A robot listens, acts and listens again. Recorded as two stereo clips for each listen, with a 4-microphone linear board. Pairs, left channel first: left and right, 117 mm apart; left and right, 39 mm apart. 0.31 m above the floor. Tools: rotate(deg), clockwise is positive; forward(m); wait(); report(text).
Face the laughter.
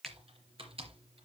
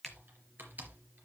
wait()
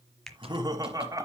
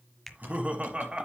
rotate(30)
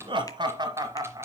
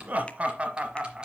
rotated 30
rotate(30)
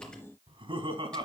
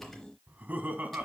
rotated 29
rotate(135)
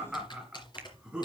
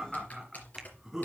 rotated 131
report("Found it: laughter, straight ahead.")